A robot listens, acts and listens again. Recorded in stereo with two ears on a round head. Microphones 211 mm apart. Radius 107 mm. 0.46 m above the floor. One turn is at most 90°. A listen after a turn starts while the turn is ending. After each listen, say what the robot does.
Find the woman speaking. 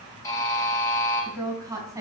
Turn 30° right.
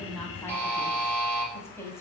Turn 10° left.
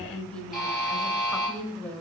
Found it: a woman speaking, straight ahead.